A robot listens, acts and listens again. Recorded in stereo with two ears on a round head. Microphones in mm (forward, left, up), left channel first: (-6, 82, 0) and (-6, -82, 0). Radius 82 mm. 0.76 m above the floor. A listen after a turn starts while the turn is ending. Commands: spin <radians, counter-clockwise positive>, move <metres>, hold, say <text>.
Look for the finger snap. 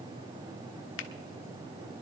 spin 1.22
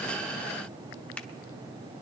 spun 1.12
spin 0.17
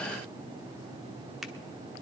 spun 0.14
say Found it: a finger snap, straight ahead.